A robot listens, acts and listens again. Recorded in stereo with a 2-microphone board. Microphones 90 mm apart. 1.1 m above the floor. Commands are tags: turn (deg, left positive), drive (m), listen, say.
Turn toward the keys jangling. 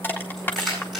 <turn deg="30"/>
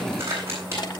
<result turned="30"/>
<turn deg="-30"/>
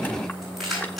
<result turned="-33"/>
<say>Found it: keys jangling, straight ahead, over 4 m away.</say>